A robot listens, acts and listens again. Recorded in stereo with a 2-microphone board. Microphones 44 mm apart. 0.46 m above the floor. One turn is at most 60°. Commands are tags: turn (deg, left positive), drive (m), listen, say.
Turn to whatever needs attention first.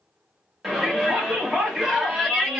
<turn deg="-30"/>
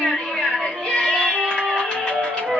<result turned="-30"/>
<turn deg="25"/>
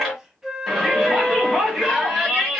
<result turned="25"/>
<say>Facing the shout.</say>